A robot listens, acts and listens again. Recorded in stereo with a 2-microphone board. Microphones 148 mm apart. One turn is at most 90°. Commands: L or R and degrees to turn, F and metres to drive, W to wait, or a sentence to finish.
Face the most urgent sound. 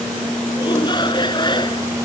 L30
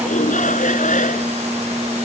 L90
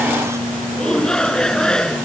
Facing the shout.